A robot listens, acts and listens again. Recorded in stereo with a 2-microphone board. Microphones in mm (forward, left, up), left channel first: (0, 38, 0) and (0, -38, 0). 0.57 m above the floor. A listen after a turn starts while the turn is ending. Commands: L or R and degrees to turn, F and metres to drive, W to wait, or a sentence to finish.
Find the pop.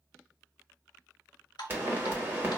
R30
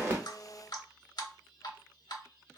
W
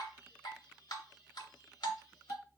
I heard a pop, but can't make it out now. It was about straight ahead or 120° right.